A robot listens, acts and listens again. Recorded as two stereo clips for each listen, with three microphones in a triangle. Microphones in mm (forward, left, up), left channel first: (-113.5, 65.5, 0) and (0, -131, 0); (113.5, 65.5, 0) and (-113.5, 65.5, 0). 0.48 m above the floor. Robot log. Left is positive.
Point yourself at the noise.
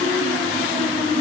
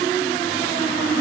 cmd idle
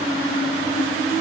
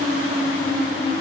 cmd idle
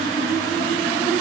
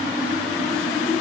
end: I can't make out anything to turn to.